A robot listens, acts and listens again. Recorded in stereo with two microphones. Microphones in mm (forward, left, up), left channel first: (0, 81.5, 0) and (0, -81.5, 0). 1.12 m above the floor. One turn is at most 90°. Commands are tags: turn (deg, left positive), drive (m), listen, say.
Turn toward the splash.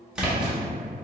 <turn deg="-30"/>
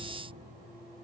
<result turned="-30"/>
<listen/>
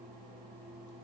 <say>I heard a splash, but can't make it out now. It was about 25° left or 145° right.</say>